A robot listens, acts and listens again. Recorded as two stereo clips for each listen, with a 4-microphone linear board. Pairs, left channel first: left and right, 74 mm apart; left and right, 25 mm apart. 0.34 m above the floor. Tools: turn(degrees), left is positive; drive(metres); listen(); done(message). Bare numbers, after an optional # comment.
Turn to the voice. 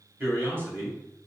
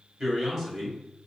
# The man speaking: about 30° right or 150° right.
turn(-30)
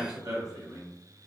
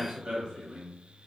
# So it is at 115° right.
turn(-115)
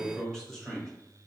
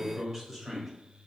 # The man speaking is now 10° left.
turn(10)
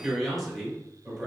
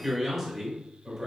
done("Found it: a man speaking, straight ahead, 1 to 2 m away.")